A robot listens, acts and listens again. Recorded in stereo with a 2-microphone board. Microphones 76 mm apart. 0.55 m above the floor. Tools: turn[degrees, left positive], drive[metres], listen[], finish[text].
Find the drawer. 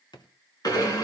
Thought: The drawer: about 70° left or 110° left.
Action: turn[70]
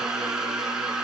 Action: listen[]
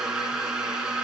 Action: listen[]
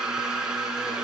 Action: finish[I heard a drawer, but can't make it out now. It was about straight ahead or 40° left.]